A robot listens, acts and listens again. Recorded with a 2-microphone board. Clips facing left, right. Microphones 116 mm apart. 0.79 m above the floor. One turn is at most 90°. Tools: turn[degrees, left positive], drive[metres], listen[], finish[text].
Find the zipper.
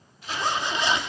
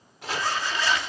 Thought: The zipper: about 20° left or 160° left.
Action: turn[20]
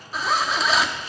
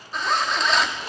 Action: finish[Found it: a zipper, straight ahead.]